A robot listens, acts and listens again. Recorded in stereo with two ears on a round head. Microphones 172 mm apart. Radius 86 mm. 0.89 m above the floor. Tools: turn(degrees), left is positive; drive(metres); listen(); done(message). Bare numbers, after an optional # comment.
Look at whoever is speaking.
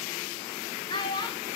# The child speaking: about 25° left or 155° left.
turn(25)
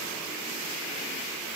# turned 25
listen()
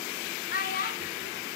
# So it is at 130° left.
turn(130)
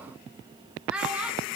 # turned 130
done("Found it: a child speaking, straight ahead.")